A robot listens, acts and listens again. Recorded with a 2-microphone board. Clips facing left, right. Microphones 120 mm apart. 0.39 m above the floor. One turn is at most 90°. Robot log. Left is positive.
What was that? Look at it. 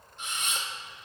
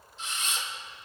note: The camera shutter: about 55° left or 125° left.
cmd yaw +55
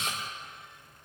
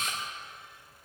note: So it is at 70° left.
cmd yaw +70
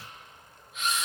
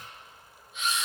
end: Facing the camera shutter, 2 to 4 m away.